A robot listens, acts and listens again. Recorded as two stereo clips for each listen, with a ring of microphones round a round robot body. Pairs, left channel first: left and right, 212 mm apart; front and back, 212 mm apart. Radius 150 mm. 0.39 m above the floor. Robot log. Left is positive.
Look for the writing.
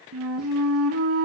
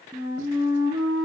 cmd idle
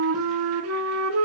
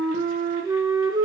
cmd idle
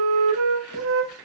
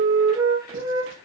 end: I can't make out writing to turn to.